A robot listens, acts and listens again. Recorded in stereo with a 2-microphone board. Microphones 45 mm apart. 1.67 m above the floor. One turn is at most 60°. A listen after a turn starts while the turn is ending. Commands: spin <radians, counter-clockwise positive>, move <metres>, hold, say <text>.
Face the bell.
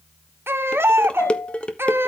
spin 1.05
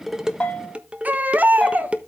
spin 0.35
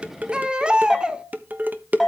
say Facing the bell, 2 to 4 m away.